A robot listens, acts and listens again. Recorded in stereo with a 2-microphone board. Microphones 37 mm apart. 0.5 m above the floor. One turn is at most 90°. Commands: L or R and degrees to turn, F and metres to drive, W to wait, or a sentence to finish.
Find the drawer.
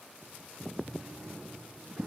R45
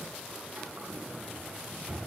R90
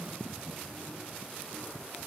R20
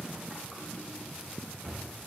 Found it: a drawer, straight ahead.